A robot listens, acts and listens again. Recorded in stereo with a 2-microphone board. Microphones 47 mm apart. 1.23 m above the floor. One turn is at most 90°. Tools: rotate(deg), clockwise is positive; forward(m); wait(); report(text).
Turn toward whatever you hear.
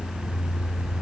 wait()
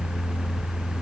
wait()
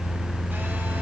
report("I can't make out anything to turn to.")